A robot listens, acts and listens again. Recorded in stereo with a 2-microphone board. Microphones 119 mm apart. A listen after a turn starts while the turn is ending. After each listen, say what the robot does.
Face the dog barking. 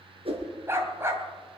Turn 20° right.
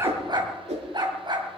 Turn 140° right.
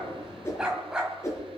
Facing the dog barking, 2 to 4 m away.